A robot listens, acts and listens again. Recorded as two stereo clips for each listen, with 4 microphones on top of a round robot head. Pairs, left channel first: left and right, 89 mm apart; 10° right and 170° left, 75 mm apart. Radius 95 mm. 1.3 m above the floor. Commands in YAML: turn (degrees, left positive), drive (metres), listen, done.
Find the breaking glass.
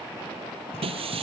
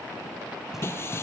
turn: -70
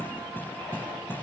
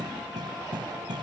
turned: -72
done: "Facing where the breaking glass came from. I can't hear it now."